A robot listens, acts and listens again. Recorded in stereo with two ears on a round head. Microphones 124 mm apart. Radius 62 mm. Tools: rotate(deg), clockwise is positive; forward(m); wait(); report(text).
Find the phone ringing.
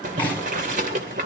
wait()
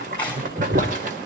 wait()
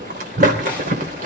report("I can't make out a phone ringing, only boiling.")